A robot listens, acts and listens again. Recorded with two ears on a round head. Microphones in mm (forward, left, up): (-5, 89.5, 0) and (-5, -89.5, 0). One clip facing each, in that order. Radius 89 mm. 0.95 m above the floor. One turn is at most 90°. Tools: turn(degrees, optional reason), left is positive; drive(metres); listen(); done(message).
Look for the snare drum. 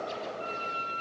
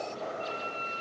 listen()
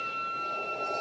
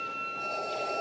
listen()
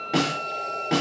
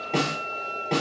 turn(degrees=30)
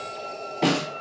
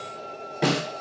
turn(degrees=-15, reason="So it is at 15° right.")
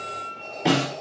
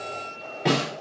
done("Found it: a snare drum, straight ahead.")